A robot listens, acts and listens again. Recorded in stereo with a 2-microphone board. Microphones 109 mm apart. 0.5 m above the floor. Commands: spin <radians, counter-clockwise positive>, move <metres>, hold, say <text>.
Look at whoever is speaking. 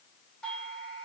hold
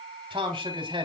spin -0.87
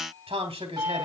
spin -1.31
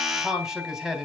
say Found it: a man speaking, straight ahead, 2 to 4 m away.